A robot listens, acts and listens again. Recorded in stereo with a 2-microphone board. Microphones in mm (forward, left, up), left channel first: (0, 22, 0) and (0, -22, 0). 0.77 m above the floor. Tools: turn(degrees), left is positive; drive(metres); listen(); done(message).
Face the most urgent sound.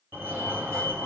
turn(degrees=-55)
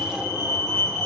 turn(degrees=-10)
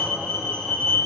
done("Facing the fire alarm, over 4 m away.")